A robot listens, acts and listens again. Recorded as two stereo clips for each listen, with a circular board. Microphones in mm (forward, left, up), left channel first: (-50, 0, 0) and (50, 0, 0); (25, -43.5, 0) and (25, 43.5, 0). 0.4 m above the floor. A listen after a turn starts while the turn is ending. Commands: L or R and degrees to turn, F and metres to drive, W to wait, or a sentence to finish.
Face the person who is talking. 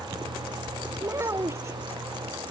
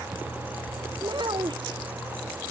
L65
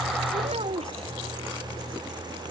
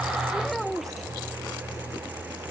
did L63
Found it: a child speaking, straight ahead.